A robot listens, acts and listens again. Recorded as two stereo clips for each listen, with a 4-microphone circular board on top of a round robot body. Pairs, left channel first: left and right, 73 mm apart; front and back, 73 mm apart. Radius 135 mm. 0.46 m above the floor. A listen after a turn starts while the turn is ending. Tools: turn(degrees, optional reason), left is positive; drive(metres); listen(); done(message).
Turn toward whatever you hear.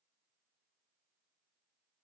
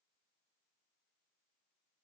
listen()
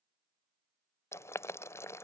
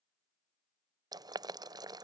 turn(degrees=145, reason="The boiling: 145° left.")
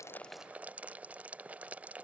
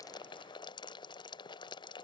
turn(degrees=-20, reason="The boiling is now 20° right.")
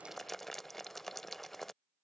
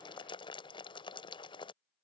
done("Facing the boiling.")